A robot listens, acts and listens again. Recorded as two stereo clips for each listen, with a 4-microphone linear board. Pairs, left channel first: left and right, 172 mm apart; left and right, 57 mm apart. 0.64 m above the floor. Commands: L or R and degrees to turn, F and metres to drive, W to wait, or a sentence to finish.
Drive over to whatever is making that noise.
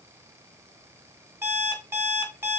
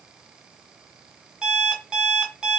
R30
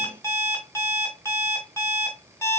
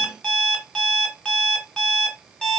L15
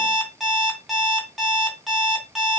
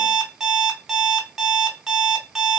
F1.0
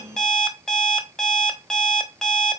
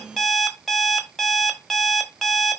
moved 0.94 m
F1.0
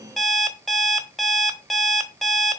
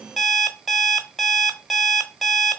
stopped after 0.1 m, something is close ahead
Arrived at the alarm clock, straight ahead.